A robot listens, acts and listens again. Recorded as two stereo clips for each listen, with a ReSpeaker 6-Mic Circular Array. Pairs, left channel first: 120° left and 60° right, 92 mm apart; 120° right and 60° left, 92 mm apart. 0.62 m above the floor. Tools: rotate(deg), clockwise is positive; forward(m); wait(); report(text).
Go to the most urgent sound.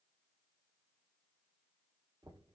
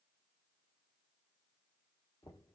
wait()
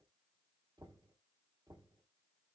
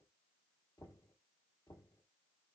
wait()
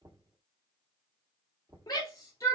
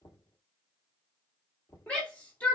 rotate(-165)
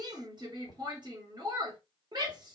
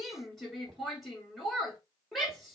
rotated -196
rotate(30)
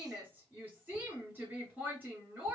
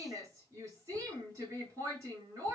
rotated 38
rotate(-10)
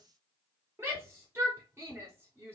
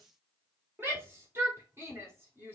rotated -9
forward(1.0)
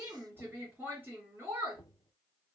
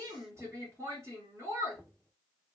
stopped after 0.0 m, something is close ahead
report("Something is in my way. I am facing the shout but have not reached it.")